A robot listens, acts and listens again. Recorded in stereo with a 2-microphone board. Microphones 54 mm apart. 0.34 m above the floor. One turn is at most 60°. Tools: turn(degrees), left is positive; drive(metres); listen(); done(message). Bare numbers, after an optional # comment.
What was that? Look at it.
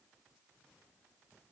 listen()
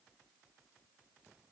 listen()
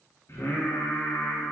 # The singing: about 50° left or 130° left.
turn(50)
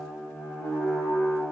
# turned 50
# So it is at 75° left.
turn(60)
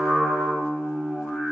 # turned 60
# The singing is now 15° left.
turn(15)
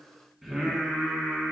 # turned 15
done("Facing the singing, 2 to 4 m away.")